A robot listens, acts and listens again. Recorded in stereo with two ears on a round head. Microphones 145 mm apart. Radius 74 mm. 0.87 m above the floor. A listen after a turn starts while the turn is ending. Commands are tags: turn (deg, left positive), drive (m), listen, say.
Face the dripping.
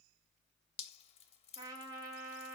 <turn deg="40"/>
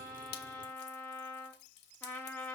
<turn deg="100"/>
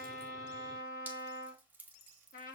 <turn deg="-10"/>
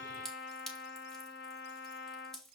<say>Facing the dripping.</say>